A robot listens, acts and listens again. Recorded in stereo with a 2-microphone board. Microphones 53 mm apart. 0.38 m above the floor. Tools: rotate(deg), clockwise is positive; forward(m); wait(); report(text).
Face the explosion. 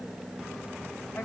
wait()
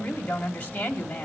wait()
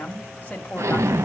rotate(70)
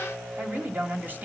wait()
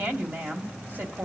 report("I heard an explosion, but can't make it out now. It was about straight ahead or 40° right.")